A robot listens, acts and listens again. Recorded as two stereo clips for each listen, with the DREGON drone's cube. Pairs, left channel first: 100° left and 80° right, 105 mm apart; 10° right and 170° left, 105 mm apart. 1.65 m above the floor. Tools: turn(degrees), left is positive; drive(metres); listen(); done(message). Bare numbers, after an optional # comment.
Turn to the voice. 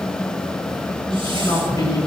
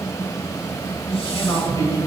# The man speaking: 45° left.
turn(45)
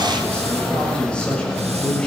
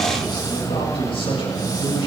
# The man speaking is now 20° left.
turn(20)
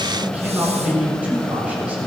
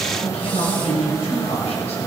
done("Found it: a man speaking, straight ahead.")